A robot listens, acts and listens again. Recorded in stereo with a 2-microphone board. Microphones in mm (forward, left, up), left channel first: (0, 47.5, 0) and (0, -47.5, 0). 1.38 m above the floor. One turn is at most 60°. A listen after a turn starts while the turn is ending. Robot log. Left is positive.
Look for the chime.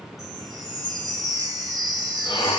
note: The chime: about 45° right or 135° right.
cmd yaw -45
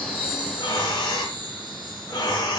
note: So it is at 80° right.
cmd yaw -60
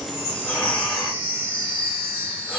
note: The chime is now 25° right.
cmd yaw -25
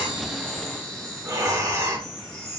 note: The chime is now 15° left.
cmd yaw +15
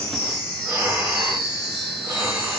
end: Found it: a chime, straight ahead.